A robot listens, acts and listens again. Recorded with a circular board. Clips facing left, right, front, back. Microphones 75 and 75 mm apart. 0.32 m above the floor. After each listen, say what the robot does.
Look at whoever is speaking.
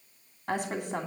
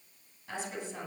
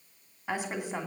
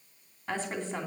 Turn 75° left.
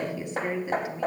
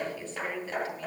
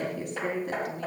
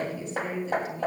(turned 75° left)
Turn 15° left.
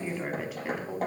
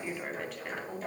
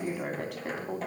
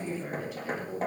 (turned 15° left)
Facing the woman speaking.